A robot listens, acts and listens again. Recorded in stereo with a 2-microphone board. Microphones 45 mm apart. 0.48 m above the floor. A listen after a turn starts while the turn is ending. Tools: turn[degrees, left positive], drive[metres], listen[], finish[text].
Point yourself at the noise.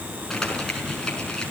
Action: turn[30]
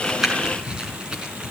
Thought: So it is at 20° right.
Action: turn[-20]
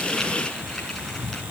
Action: listen[]
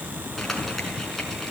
Action: finish[Facing the crumpling.]